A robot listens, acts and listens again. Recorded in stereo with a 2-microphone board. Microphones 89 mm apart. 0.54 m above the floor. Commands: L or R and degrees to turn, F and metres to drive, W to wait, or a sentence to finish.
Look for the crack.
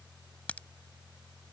L15
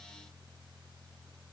W
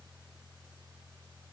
I heard a crack, but can't make it out now. It was about straight ahead or 150° left.